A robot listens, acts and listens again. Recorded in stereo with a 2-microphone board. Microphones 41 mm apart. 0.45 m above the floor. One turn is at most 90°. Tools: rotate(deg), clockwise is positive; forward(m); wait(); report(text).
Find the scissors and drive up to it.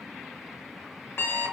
wait()
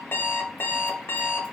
wait()
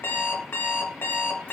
report("I can't make out scissors to turn to.")